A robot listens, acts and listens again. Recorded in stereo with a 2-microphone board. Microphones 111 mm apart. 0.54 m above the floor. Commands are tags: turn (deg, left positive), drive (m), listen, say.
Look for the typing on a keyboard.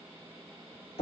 <listen/>
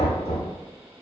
<listen/>
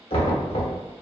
<say>I can't make out typing on a keyboard to turn to.</say>